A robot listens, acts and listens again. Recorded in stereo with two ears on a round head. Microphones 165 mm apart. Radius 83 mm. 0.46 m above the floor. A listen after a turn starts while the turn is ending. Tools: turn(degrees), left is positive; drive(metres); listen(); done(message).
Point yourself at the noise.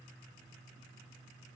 listen()
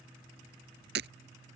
turn(degrees=-65)
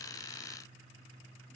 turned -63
listen()
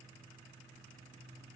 done("I heard breaking glass, but can't make it out now. It was about straight ahead or 50° right.")